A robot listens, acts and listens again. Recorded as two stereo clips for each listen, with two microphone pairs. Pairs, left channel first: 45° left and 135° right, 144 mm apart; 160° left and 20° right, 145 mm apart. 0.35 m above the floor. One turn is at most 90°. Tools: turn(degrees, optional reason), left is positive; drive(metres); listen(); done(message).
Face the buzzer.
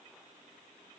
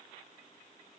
listen()
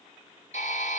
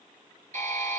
turn(degrees=15, reason="The buzzer: 15° left.")
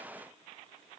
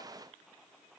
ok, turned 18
listen()
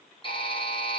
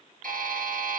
done("Facing the buzzer, over 4 m away.")